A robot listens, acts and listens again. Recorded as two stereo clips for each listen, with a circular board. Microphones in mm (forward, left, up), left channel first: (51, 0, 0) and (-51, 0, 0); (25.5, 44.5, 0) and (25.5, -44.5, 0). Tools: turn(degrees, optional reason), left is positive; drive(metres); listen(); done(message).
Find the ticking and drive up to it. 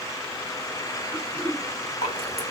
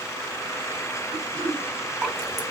listen()
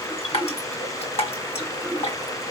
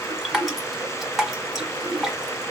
listen()
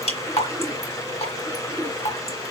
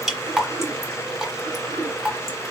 done("I can't make out ticking, only dripping and throat clearing.")